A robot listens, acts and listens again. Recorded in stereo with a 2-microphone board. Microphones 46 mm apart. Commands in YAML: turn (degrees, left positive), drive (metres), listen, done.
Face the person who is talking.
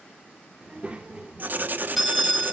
turn: -25
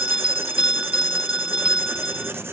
listen: true
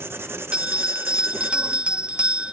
listen: true
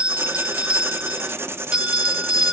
done: "I heard a child speaking, but can't make it out now. It was about straight ahead or 130° right."